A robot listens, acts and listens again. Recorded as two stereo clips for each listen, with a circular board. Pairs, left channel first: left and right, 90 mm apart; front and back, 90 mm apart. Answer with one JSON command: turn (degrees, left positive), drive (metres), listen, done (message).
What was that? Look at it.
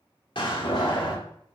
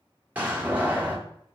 {"turn": 110}
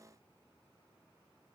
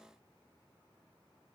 {"done": "Facing where the door slam came from. I can't hear it now."}